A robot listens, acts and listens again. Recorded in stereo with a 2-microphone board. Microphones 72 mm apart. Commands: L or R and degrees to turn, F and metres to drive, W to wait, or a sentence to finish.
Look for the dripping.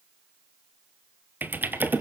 W
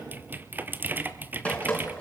L15
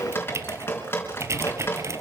L150
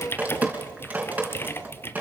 R20
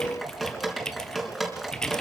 Facing the dripping.